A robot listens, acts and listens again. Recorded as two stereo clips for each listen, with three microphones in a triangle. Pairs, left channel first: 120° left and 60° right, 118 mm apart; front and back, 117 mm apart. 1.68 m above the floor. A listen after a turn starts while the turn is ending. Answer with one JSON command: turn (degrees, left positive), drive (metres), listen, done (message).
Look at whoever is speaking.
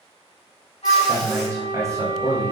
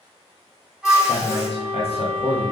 {"done": "Found it: a man speaking, straight ahead, 1 to 2 m away."}